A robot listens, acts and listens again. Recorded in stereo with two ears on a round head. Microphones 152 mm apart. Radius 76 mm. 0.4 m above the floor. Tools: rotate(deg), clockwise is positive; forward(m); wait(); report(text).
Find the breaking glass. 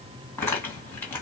wait()
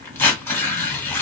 wait()
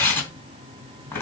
report("I can't make out breaking glass, only tearing paper.")